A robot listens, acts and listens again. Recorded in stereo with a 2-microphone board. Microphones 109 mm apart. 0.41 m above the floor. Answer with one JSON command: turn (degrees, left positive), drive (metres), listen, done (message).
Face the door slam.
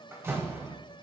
{"turn": -25}
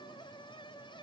{"listen": true}
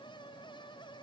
{"done": "I heard a door slam, but can't make it out now. It was about straight ahead or 130° right."}